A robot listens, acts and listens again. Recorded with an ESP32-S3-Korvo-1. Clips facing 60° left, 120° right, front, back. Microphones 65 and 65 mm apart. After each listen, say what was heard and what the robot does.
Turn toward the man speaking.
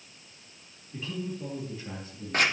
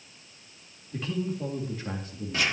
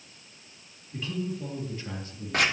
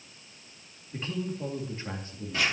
The man speaking: 120° right. Turn 120° right.
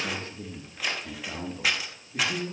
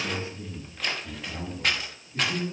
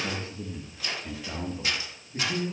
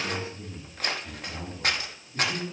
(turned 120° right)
The man speaking is now 50° left. Turn 50° left.
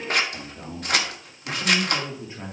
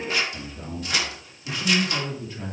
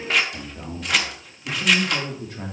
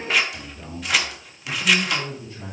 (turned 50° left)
Facing the man speaking.